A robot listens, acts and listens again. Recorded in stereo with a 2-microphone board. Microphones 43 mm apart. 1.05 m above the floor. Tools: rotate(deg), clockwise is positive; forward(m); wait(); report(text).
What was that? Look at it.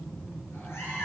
rotate(-70)
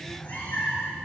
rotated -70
rotate(-40)
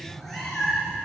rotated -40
report("Found it: a cat meowing, straight ahead, over 4 m away.")